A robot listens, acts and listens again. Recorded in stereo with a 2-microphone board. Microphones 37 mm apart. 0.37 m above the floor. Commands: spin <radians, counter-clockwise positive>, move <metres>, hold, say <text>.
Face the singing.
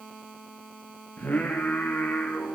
spin 0.96
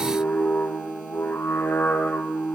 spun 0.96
spin 1.22
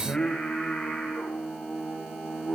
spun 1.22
spin 0.17
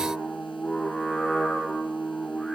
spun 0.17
say Found it: singing, straight ahead, over 4 m away.